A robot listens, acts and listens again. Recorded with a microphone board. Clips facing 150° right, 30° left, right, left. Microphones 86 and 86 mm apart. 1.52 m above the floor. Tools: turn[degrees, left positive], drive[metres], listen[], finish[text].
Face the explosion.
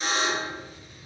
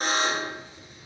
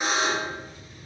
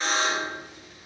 Thought: The explosion: 95° left.
Action: turn[95]
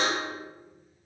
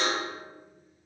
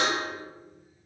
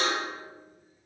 Action: finish[I heard an explosion from this way, but can't make it out now.]